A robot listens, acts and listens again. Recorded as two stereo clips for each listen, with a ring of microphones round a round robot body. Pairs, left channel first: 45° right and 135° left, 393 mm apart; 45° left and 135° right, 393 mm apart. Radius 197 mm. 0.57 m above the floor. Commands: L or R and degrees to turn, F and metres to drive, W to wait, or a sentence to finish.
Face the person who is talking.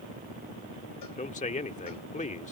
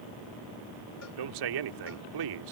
R115
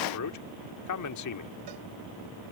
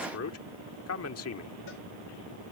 Facing the man speaking.